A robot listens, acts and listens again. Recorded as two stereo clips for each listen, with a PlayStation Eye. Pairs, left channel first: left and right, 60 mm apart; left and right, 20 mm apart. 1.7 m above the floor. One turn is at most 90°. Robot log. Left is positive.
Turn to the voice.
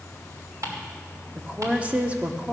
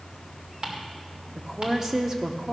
note: The woman speaking: about 25° right or 155° right.
cmd yaw -25
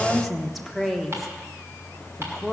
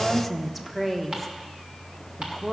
end: Facing the woman speaking, 1 to 2 m away.